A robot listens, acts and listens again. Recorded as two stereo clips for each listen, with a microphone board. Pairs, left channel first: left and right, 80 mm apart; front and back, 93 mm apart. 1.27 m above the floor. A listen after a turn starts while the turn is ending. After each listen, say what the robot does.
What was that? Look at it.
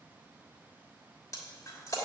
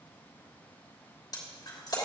Turn 45° left.
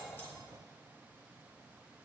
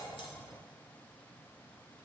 I heard breaking glass from this way, but can't make it out now.